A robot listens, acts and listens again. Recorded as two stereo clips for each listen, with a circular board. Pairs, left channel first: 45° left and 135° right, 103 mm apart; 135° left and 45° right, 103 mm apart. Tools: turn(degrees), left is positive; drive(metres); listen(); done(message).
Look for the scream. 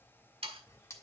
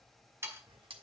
listen()
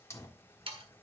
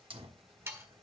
listen()
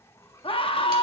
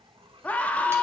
turn(degrees=60)
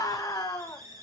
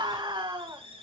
done("Facing the scream.")